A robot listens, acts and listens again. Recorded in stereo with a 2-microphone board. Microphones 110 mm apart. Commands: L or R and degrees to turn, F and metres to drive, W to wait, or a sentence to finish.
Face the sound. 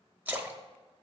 R20
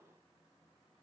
W
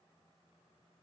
I heard a splash, but can't make it out now. It was about straight ahead or 140° right.